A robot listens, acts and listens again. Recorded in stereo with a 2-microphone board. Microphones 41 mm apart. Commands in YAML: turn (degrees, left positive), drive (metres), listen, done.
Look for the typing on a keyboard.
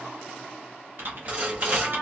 turn: -55
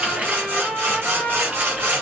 turn: -45
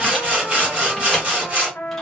listen: true
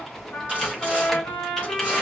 listen: true
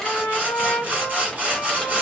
done: "I heard typing on a keyboard from this way, but can't make it out now."